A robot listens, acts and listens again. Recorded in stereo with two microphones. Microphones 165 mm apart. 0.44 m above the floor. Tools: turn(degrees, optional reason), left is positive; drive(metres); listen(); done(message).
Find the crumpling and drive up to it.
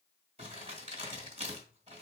turn(degrees=-40, reason="The crumpling: about 40° right or 140° right.")
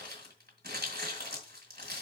turn(degrees=-100, reason="So it is at 100° right.")
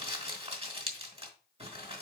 turn(degrees=-40, reason="The crumpling is now 40° right.")
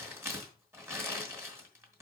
turn(degrees=-15, reason="The crumpling is now 15° right.")
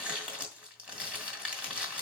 drive(metres=1.0)
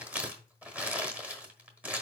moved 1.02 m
turn(degrees=-10, reason="The crumpling is now 10° right.")
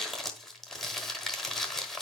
drive(metres=1.0)
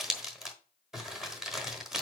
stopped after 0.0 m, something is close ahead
done("Arrived at the crumpling, straight ahead.")